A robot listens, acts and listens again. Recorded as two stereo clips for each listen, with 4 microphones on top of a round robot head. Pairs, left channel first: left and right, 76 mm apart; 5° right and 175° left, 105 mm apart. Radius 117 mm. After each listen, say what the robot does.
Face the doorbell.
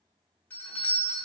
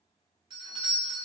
Turn 150° left.
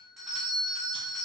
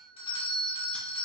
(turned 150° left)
Found it: a doorbell, straight ahead, 1 to 2 m away.